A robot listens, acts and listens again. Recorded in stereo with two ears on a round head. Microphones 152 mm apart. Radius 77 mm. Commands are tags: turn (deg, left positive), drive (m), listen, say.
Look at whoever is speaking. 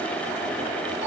<listen/>
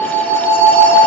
<listen/>
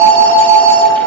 <say>I can't make out anyone speaking to turn to.</say>